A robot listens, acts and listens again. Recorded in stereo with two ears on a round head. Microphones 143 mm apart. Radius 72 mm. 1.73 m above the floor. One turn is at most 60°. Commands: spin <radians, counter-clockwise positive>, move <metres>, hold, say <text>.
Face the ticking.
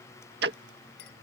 spin -1.05
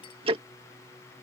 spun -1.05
spin -0.61
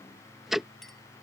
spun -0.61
say Found it: ticking, straight ahead.